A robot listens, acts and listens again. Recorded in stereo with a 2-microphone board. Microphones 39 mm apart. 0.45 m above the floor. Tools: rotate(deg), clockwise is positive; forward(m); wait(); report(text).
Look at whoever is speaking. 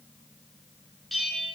wait()
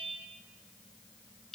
wait()
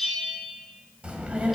rotate(25)
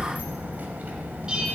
rotate(130)
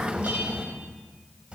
rotate(30)
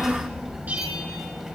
rotate(15)
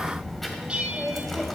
report("Facing the child speaking.")